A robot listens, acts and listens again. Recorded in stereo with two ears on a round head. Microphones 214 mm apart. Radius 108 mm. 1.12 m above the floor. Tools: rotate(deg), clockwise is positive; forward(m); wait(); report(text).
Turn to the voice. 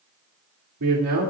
rotate(75)
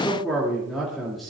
report("Facing the man speaking.")